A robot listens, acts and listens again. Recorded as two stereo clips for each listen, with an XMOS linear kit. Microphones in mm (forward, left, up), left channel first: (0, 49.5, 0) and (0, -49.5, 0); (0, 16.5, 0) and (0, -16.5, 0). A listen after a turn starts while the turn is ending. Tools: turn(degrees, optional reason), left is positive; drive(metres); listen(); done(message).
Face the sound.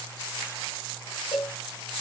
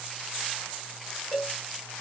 turn(degrees=45, reason="The cowbell: about 45° left or 135° left.")
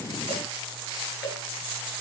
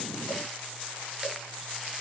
listen()
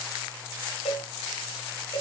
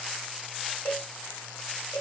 turn(degrees=90, reason="So it is at 90° left.")
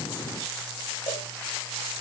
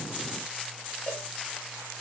listen()
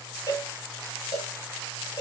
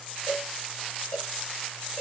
turn(degrees=40, reason="The cowbell is now 40° left.")
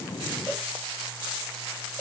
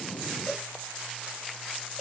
done("Found it: a cowbell, straight ahead.")